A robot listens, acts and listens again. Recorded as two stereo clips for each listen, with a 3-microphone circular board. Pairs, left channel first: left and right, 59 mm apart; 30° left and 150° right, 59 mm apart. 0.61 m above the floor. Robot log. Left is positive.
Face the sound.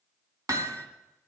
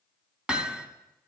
note: The hammering: 75° right.
cmd yaw -75
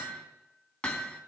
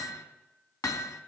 note: The hammering is now 15° left.
cmd yaw +15
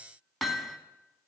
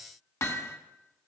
end: Found it: hammering, straight ahead, 1 to 2 m away.